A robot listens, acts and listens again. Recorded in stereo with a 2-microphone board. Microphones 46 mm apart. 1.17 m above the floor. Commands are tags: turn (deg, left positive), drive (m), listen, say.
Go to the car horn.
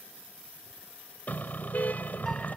<turn deg="35"/>
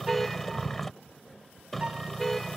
<drive m="1.0"/>
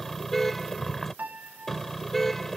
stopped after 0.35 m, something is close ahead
<say>Blocked. The car horn is further on, straight ahead.</say>